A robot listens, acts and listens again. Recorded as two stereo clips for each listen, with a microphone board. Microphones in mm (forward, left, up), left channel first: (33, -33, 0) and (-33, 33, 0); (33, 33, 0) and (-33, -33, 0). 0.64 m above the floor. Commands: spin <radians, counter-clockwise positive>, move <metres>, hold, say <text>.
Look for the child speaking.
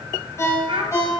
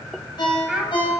spin 2.53
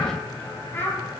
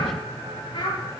spin 0.35
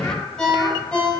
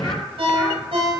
hold
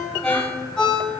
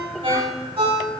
hold
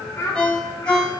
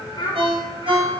spin 0.26
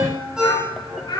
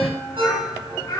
say Found it: a child speaking, straight ahead.